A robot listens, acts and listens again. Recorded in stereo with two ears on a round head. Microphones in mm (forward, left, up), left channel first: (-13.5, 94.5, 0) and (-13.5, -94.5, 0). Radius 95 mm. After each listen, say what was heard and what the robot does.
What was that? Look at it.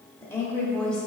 Turn 30° left.
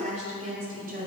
So it is at 40° right. Turn 40° right.
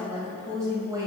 The woman speaking is now 20° right. Turn 20° right.
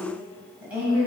The woman speaking is now 10° right. Turn 10° right.
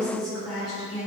Found it: a woman speaking, straight ahead, 2 to 4 m away.